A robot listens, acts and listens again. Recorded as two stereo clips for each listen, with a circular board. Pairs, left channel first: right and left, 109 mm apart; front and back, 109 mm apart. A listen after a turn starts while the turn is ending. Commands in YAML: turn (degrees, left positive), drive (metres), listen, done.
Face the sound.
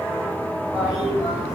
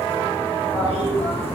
turn: 10
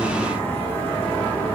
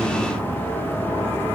done: "Facing the toilet flushing, 1 to 2 m away."